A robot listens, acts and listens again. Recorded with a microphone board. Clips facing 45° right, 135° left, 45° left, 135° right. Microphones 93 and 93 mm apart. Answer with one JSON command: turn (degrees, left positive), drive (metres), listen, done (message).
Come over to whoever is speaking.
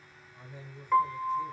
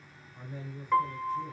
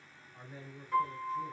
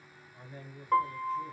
{"turn": 100}
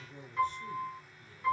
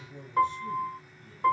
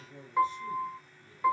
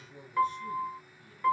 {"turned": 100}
{"turn": -15}
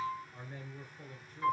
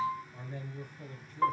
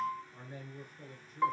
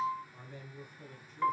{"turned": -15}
{"drive": 1.0}
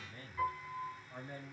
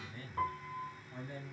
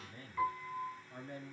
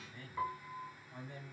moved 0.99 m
{"drive": 1.0}
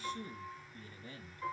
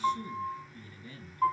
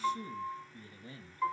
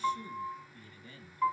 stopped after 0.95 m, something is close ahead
{"done": "I am next to the man speaking."}